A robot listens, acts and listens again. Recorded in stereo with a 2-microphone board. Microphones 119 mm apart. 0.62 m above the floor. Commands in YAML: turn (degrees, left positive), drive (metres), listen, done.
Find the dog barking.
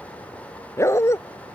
turn: 25
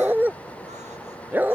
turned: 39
turn: -15
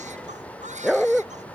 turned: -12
done: "Facing the dog barking."